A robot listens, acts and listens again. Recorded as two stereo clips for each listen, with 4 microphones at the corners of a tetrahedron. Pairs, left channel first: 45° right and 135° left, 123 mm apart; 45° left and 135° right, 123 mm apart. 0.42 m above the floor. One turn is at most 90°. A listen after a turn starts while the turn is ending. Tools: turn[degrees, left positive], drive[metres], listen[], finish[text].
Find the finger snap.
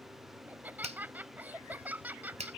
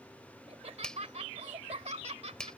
Thought: The finger snap: 130° left.
Action: turn[90]
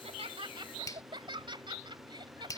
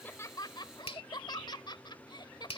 Thought: The finger snap is now 10° left.
Action: turn[10]
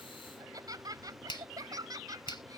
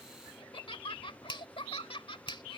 Action: finish[Facing the finger snap.]